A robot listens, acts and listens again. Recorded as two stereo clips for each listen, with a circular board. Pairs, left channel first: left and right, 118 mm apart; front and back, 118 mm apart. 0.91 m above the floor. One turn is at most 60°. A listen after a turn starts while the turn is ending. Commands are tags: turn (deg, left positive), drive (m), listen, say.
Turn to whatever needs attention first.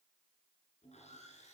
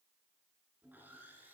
<listen/>
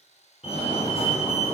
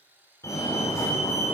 <turn deg="60"/>
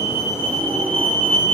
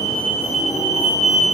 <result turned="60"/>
<turn deg="15"/>
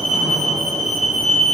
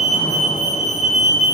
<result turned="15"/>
<say>Facing the fire alarm, over 4 m away.</say>